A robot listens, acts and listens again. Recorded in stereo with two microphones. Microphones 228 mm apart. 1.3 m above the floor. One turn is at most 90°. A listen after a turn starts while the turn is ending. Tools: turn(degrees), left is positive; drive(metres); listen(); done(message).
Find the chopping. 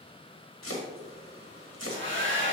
turn(degrees=70)
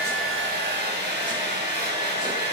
listen()
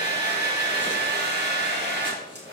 listen()
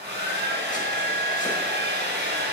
done("I heard chopping, but can't make it out now. It was about straight ahead or 40° left.")